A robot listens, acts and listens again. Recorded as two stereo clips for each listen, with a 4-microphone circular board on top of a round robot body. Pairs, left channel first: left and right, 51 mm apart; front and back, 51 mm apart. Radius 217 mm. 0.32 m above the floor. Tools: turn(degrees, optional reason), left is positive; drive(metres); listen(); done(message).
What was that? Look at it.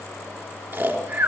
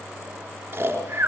turn(degrees=-130, reason="The snoring: 130° right.")
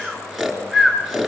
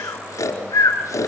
done("Facing the snoring, 2 to 4 m away.")